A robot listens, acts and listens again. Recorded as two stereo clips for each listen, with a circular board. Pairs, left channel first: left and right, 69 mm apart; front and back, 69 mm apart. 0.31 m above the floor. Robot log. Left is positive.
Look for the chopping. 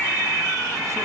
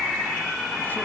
cmd idle
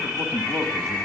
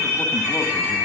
cmd idle
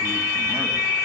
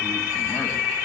end: I can't make out chopping to turn to.